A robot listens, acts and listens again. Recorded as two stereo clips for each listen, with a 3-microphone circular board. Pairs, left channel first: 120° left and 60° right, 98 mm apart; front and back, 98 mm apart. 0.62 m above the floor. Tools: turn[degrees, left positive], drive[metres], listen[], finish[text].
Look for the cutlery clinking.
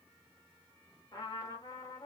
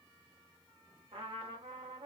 Action: listen[]
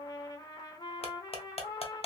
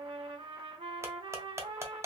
Thought: The cutlery clinking: 120° left.
Action: turn[120]
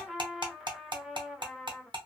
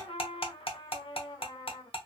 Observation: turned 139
Thought: The cutlery clinking is now 20° right.
Action: turn[-20]
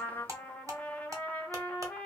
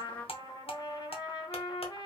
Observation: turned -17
Action: finish[Facing the cutlery clinking.]